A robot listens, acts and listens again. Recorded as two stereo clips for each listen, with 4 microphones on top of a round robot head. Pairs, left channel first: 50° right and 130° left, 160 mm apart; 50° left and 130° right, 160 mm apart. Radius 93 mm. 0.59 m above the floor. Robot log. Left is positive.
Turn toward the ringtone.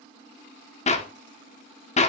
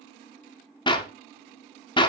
cmd idle
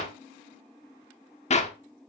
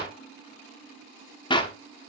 cmd idle
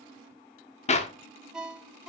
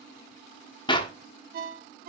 note: The ringtone: 145° right.
cmd yaw -145
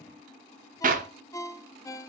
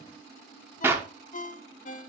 note: The ringtone is now 20° left.
cmd yaw +20
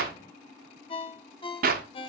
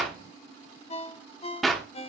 end: Facing the ringtone, under 1 m away.